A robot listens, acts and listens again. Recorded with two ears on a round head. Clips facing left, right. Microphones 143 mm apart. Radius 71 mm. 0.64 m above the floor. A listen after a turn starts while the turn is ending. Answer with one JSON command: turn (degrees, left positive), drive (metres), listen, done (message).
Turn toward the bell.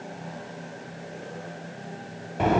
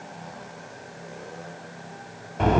{"listen": true}
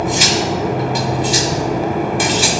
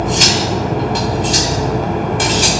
{"listen": true}
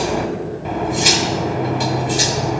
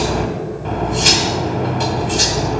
{"done": "I can't make out a bell, only cutlery clinking."}